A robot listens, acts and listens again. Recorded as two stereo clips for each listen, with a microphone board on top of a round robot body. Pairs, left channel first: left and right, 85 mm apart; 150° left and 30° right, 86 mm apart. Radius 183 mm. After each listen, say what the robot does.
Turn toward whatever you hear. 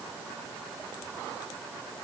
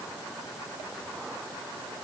Keep listening.
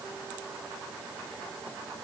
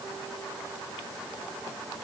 Keep listening.
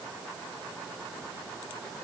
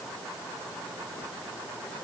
I can't make out anything.